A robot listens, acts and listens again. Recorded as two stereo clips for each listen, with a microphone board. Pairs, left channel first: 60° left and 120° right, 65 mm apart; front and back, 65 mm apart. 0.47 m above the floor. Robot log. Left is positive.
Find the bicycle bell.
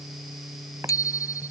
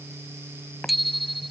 note: The bicycle bell: 90° left.
cmd yaw +90
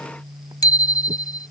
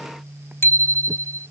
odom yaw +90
note: The bicycle bell is now 50° left.
cmd yaw +50
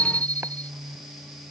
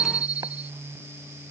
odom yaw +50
end: Facing the bicycle bell.